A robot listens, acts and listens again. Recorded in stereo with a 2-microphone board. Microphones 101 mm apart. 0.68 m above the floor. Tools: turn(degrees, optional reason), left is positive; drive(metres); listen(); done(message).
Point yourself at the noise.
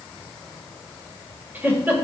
turn(degrees=-20, reason="The giggle: about 20° right or 160° right.")
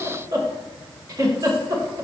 turn(degrees=-140, reason="So it is at 140° right.")
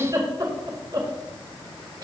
turn(degrees=-45, reason="The giggle is now 45° right.")
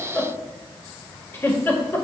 turn(degrees=20, reason="The giggle is now 20° left.")
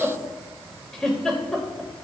done("Found it: a giggle, straight ahead.")